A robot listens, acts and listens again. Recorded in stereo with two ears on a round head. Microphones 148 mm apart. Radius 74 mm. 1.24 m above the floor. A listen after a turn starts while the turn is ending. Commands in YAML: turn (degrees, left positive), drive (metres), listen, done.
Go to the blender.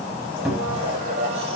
turn: -45
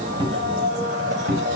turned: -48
turn: -85
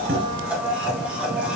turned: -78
turn: -10
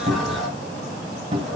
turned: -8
listen: true
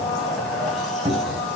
drive: 1.0
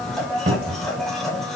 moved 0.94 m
drive: 1.0
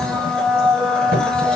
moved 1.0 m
drive: 1.0
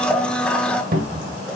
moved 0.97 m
drive: 1.0
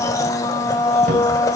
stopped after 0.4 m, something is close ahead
turn: 25
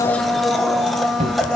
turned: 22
done: "Arrived at the blender, straight ahead."